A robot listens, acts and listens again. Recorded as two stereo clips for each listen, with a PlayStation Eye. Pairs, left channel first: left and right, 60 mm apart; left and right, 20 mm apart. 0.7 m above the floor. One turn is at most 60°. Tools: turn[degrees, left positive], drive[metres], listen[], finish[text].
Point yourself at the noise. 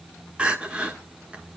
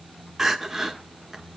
Thought: The crying: about 20° right or 160° right.
Action: turn[-20]
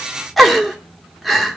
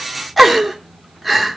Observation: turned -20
Action: finish[Found it: crying, straight ahead, 1 to 2 m away.]